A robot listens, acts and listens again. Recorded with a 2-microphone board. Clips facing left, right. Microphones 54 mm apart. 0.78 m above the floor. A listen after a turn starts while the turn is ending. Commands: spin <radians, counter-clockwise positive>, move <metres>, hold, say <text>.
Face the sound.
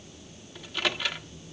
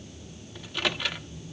spin 0.52
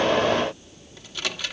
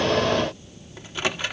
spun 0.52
spin -0.52
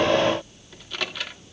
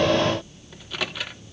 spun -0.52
say Facing the microwave.